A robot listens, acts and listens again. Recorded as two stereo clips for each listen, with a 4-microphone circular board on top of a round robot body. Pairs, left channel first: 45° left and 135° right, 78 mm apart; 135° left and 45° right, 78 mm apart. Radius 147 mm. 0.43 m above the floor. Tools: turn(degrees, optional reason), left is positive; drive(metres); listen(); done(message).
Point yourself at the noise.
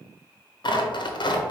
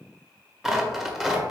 turn(degrees=40, reason="The tearing paper: 40° left.")
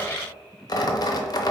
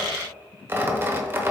turn(degrees=15, reason="The tearing paper is now 15° left.")
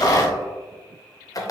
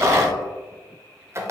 done("Found it: tearing paper, straight ahead.")